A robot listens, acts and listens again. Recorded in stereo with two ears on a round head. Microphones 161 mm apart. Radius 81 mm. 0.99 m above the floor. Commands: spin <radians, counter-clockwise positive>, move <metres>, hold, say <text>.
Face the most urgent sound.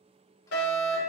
spin 1.57
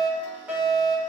spin -0.17
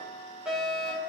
say Found it: a fire alarm, straight ahead.